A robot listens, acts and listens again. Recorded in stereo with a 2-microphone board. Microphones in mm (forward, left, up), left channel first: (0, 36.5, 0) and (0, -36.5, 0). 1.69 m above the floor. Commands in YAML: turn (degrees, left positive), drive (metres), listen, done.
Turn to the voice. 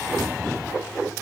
listen: true
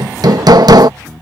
listen: true
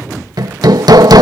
done: "I can't make out anyone speaking, only hammering."